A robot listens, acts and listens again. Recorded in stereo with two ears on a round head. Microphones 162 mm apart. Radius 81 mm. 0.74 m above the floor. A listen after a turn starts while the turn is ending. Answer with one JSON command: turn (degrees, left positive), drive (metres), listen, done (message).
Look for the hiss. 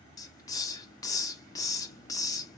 {"turn": 20}
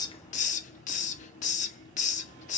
{"turn": 140}
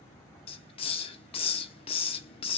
{"turn": 30}
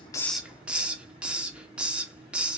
{"done": "Found it: a hiss, straight ahead."}